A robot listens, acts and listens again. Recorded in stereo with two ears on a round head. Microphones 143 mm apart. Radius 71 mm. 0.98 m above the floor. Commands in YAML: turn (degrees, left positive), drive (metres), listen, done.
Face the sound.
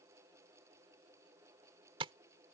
turn: -35
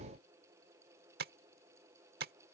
turn: -110
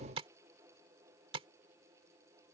turn: -40
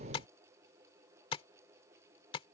turn: 35
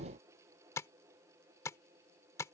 turn: 20
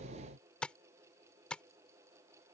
done: "Found it: tapping, straight ahead."